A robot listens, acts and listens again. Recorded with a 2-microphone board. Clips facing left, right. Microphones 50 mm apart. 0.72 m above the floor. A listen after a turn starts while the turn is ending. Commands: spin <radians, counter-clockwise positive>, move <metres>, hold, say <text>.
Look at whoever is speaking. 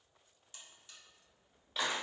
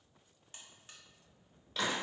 hold
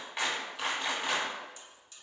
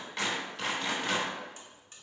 hold
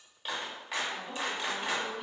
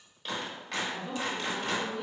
spin 0.44
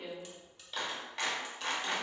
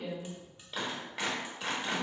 hold
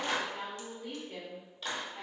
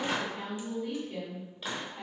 spin 2.27
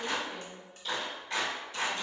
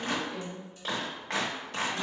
spin 1.13
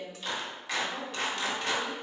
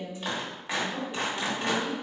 spin -0.35
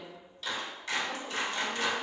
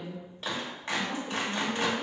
say Found it: a woman speaking, straight ahead.